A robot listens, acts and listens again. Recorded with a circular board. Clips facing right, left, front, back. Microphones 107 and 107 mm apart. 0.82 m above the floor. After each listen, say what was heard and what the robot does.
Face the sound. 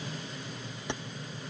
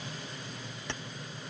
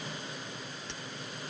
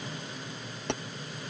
The keys jangling: 165° right. Turn 165° right.
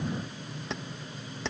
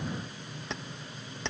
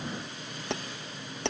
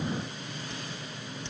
Facing the keys jangling.